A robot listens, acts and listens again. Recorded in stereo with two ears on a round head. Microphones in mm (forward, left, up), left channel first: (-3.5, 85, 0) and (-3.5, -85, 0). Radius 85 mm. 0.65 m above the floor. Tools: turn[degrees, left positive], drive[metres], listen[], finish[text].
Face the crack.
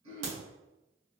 Thought: The crack: about 65° right or 115° right.
Action: turn[-65]
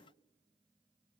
Action: listen[]
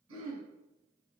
Action: finish[I heard a crack, but can't make it out now. It was about straight ahead or 50° right.]